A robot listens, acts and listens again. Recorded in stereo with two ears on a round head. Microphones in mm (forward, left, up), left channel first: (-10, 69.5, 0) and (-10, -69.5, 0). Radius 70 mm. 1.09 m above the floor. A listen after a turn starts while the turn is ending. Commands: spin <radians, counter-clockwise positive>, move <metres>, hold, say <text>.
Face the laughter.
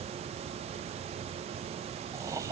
spin -0.35
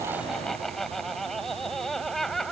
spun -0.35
say Found it: laughter, straight ahead.